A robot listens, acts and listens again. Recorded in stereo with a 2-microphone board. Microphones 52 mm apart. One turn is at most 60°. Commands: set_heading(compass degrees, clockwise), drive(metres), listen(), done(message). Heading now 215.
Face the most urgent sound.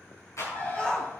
set_heading(200)
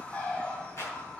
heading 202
listen()
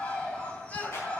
set_heading(142)
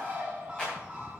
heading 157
set_heading(97)
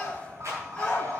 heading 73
set_heading(53)
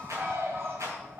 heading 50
listen()
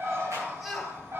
done("Found it: a shout, straight ahead.")